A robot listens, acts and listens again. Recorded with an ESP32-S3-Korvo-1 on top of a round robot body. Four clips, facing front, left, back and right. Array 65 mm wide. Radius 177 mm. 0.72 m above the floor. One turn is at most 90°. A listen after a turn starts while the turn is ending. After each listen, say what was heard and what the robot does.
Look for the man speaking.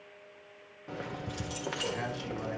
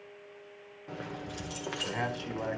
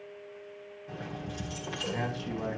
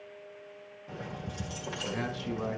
The man speaking: 90° left. Turn 90° left.
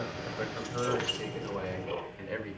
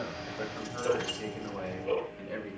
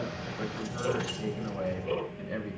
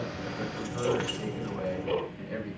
Found it: a man speaking, straight ahead, over 4 m away.